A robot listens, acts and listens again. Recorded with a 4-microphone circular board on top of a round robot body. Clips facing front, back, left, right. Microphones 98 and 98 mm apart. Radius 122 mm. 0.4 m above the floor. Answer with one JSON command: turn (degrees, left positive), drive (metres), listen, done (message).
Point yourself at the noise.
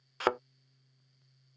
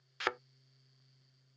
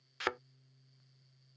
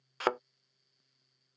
{"turn": -45}
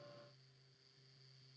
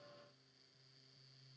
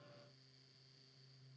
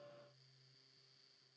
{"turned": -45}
{"done": "Facing where the thud came from. I can't hear it now."}